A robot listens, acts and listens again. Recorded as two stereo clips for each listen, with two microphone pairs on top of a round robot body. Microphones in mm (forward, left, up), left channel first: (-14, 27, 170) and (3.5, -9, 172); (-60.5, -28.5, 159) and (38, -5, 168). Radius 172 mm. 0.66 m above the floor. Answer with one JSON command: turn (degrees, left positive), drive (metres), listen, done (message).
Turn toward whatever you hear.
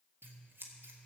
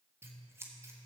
{"turn": -55}
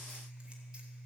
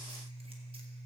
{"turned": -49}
{"done": "Facing the scissors."}